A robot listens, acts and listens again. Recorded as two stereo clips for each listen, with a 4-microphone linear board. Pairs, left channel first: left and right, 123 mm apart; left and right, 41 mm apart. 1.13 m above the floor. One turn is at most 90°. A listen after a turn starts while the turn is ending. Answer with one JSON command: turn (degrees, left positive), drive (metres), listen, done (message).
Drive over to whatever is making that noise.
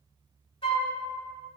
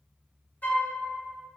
{"turn": 45}
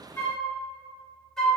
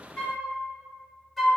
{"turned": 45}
{"drive": 1.0}
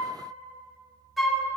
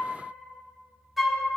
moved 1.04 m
{"drive": 1.0}
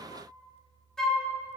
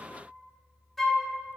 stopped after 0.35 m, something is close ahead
{"done": "I am next to the flute."}